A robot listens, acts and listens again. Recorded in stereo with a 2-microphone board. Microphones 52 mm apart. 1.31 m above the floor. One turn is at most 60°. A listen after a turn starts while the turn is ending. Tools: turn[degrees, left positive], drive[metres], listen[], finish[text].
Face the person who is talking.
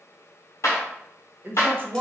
Thought: The woman speaking: about 40° right or 140° right.
Action: turn[-40]
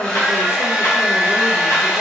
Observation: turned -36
Action: listen[]
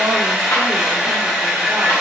Action: listen[]
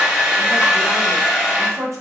Thought: So it is at 100° right.
Action: turn[-60]
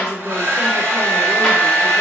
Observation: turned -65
Thought: Nothing new. It was at 35° right.
Action: turn[-35]
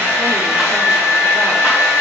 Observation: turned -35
Action: listen[]
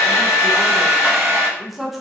Action: finish[Found it: a woman speaking, straight ahead.]